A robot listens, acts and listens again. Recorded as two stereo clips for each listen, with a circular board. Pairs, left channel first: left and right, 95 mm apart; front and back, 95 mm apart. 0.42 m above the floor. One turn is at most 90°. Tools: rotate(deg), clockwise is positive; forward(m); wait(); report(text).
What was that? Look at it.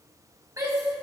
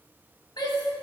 rotate(40)
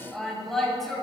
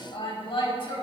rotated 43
report("Facing the shout, 2 to 4 m away.")